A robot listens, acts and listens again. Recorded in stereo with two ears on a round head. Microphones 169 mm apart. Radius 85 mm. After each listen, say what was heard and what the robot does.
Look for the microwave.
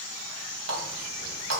Keep listening.
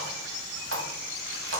Keep listening.
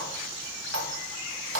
I can't make out a microwave, only a running tap.